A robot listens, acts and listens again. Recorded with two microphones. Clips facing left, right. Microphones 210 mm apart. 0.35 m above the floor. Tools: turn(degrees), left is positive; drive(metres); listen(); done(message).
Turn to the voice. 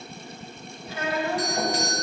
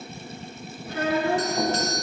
turn(degrees=-60)
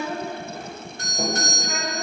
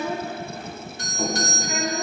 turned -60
turn(degrees=-10)
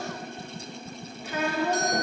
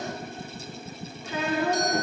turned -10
done("Found it: a child speaking, straight ahead.")